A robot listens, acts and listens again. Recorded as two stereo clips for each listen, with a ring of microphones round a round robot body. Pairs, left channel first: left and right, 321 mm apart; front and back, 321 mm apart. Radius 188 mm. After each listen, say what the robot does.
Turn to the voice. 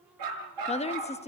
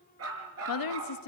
Turn 20° left.
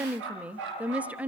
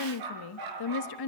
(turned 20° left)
Found it: a woman speaking, straight ahead, 1 to 2 m away.